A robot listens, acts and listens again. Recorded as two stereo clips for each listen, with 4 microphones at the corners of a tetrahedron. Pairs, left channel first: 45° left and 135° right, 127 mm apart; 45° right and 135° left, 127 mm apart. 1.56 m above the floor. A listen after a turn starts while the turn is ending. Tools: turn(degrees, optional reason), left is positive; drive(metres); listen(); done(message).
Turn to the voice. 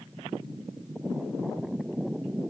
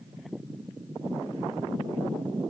listen()
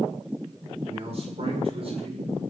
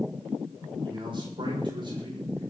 turn(degrees=-175, reason="The man speaking: 175° right.")
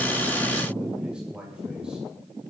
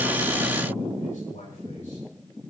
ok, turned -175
turn(degrees=-50, reason="The man speaking is now 50° right.")
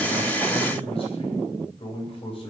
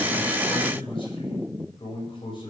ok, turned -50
done("Facing the man speaking, over 4 m away.")